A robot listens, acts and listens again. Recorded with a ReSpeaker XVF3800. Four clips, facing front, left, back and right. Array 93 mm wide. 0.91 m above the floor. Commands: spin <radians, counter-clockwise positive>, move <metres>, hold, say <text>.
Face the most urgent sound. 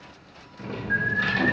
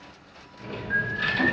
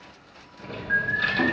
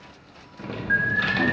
spin -1.92
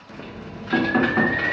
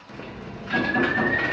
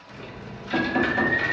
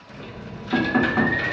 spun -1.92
hold
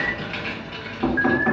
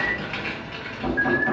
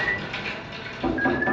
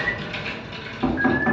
spin 0.26
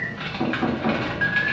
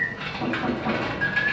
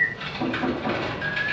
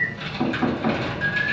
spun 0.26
say Found it: an alarm, straight ahead, 1 to 2 m away.